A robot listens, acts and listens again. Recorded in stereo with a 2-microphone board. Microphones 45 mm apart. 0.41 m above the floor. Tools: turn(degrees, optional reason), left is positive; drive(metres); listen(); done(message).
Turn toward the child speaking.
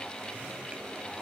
listen()
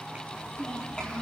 turn(degrees=20, reason="The child speaking: about 20° left or 160° left.")
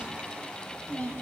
turn(degrees=35, reason="The child speaking: about 35° left or 145° left.")
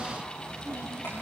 turn(degrees=110, reason="So it is at 110° left.")
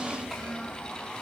done("Found it: a child speaking, straight ahead, over 4 m away.")